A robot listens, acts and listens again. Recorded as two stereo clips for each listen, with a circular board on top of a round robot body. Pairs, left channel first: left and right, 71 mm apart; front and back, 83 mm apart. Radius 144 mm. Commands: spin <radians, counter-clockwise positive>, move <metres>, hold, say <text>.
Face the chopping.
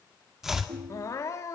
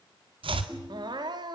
spin -3.05
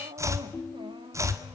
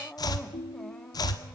spin -0.70
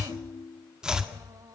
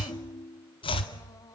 spin -0.17
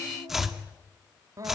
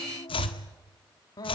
say Facing the chopping, 2 to 4 m away.